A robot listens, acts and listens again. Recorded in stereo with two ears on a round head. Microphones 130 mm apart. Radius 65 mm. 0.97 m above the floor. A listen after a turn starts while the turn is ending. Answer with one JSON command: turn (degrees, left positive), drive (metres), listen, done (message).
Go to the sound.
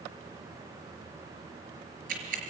{"turn": -60}
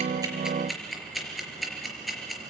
{"drive": 1.0}
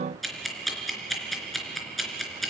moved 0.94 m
{"drive": 1.0}
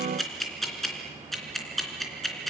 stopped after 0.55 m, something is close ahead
{"done": "Something is in my way. I am facing the ticking but have not reached it."}